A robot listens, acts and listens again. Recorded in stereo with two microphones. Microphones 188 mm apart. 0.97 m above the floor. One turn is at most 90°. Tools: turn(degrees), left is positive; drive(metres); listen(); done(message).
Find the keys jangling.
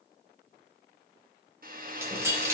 turn(degrees=-15)
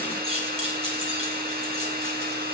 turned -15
turn(degrees=-30)
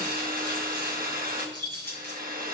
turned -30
turn(degrees=-90)
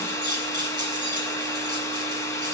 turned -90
turn(degrees=-20)
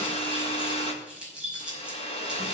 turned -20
done("Found it: keys jangling, straight ahead, over 4 m away.")